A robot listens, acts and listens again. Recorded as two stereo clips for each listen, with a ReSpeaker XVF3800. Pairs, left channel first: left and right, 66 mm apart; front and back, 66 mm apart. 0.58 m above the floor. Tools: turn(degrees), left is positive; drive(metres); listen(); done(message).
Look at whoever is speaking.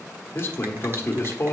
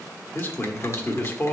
turn(degrees=50)
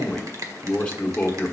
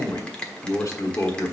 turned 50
turn(degrees=15)
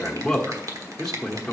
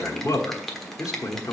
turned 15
done("Facing the man speaking.")